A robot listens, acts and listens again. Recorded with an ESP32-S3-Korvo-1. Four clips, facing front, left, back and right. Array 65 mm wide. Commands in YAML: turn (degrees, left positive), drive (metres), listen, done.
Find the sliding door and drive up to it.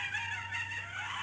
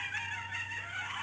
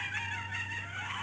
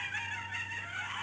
listen: true
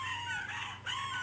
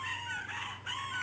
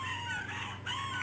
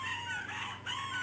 listen: true
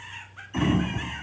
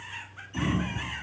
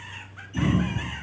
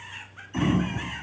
turn: -20
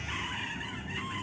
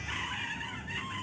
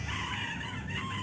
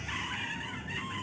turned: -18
drive: 1.0
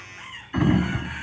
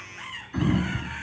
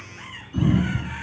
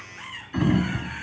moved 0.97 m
drive: 1.0
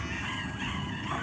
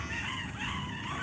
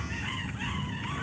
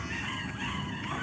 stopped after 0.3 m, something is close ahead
turn: -10
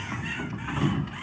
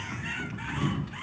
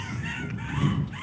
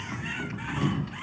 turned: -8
done: "I am next to the sliding door."